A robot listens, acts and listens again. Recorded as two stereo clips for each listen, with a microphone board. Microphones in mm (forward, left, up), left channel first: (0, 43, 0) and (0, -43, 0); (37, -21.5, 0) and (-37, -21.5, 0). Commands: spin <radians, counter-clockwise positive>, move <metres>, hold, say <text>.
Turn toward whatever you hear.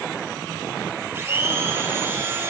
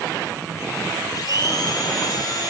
spin -0.44
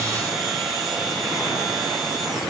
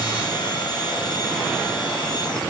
say Found it: a blender, straight ahead, 2 to 4 m away.